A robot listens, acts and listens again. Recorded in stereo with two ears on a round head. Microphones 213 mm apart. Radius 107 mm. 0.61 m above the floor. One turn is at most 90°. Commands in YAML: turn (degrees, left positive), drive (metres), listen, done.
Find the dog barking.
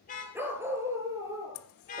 turn: -20
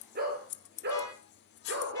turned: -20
turn: -90
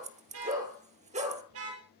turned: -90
turn: -30
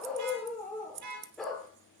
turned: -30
done: "Facing the dog barking."